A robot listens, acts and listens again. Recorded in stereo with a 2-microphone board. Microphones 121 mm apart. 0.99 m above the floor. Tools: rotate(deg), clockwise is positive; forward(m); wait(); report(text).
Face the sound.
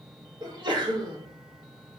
rotate(40)
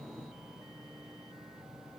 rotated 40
wait()
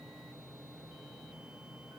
report("I heard a sneeze, but can't make it out now. It was about straight ahead or 100° right.")